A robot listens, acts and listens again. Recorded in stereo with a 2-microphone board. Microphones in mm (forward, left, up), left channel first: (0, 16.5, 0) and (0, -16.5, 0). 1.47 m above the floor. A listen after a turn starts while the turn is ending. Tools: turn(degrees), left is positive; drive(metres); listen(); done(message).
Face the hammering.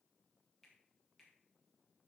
listen()
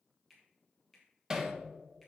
turn(degrees=-20)
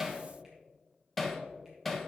done("Facing the hammering.")